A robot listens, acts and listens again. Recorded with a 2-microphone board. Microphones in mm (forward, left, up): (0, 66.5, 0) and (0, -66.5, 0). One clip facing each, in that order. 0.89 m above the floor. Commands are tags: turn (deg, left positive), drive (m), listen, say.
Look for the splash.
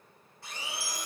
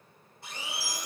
<listen/>
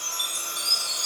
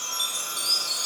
<listen/>
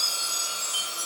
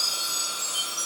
<say>I can't make out a splash to turn to.</say>